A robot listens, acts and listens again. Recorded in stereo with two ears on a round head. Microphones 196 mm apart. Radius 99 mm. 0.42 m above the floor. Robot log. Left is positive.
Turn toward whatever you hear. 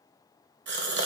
note: The gasp: about 55° right or 125° right.
cmd yaw -55
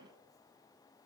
cmd idle
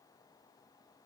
end: I heard a gasp, but can't make it out now. It was about straight ahead or 70° right.